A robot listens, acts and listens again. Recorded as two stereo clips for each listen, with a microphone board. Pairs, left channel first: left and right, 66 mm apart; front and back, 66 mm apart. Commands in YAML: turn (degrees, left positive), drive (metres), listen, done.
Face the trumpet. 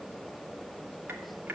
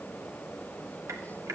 listen: true
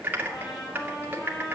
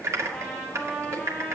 turn: 80
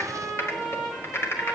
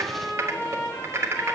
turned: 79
done: "Found it: a trumpet, straight ahead."